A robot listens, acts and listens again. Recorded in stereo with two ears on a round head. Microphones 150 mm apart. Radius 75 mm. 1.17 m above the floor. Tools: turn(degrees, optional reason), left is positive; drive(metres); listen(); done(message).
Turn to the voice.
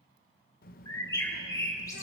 turn(degrees=60, reason="The child speaking: about 60° left or 120° left.")
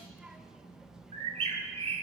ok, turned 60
done("Facing the child speaking, under 1 m away.")